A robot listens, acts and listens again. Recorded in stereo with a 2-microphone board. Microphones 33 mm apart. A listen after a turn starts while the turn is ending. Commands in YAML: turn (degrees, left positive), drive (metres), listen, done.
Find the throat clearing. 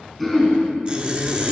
turn: 30
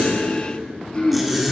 turn: 150
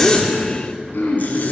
turn: 75
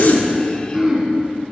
turn: -15
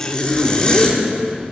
done: "Found it: throat clearing, straight ahead."